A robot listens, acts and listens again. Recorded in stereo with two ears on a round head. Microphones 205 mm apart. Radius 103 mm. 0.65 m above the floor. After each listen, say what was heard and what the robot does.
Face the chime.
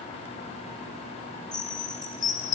The chime: about 30° left or 150° left. Turn 30° left.
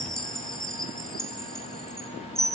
Facing the chime, under 1 m away.